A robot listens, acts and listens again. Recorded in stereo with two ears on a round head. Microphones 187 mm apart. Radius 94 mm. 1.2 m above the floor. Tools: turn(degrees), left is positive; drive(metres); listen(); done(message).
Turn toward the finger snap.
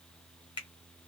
turn(degrees=25)
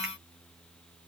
listen()
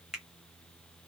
done("Facing the finger snap.")